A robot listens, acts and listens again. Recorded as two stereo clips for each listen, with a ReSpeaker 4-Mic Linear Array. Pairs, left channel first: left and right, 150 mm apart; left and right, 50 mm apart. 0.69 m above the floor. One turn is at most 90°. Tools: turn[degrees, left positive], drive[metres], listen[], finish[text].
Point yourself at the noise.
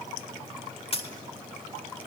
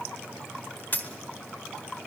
Thought: The dropped coin: about 40° left or 140° left.
Action: turn[40]
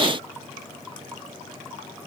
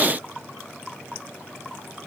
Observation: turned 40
Action: listen[]
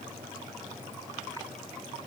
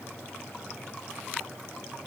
Action: finish[I heard a dropped coin, but can't make it out now. It was about straight ahead or 100° left.]